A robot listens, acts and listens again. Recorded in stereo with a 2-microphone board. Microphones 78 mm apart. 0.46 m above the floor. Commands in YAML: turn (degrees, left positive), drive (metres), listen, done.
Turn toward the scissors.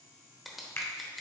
turn: 30
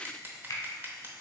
turn: -35
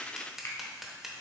done: "Found it: scissors, straight ahead."